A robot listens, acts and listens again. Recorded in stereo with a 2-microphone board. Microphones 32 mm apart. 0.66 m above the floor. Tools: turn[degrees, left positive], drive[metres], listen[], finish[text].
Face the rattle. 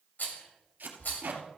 Thought: The rattle: about 65° left or 115° left.
Action: turn[65]
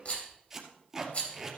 Thought: So it is at 50° left.
Action: turn[50]
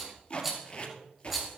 Action: finish[Found it: a rattle, straight ahead, 2 to 4 m away.]